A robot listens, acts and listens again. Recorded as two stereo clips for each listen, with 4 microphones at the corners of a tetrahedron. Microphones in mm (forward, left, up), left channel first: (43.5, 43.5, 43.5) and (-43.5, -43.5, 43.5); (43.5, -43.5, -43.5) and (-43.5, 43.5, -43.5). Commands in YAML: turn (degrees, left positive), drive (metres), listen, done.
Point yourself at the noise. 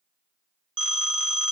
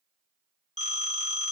turn: -50
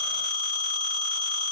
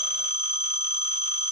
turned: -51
done: "Facing the phone ringing."